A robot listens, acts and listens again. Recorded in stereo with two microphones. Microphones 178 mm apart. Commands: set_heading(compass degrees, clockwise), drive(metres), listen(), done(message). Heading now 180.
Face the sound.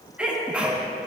set_heading(210)
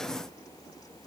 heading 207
listen()
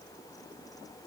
done("I heard a sneeze, but can't make it out now. It was about 20° left or 145° right.")